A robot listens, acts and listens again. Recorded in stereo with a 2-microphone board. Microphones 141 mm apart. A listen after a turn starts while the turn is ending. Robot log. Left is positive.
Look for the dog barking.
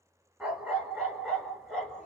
cmd yaw +30
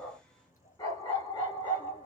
note: So it is at 145° left.
cmd yaw +145
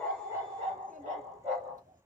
note: The dog barking is now 45° right.
cmd yaw -45
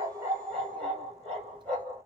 end: Found it: a dog barking, straight ahead, 2 to 4 m away.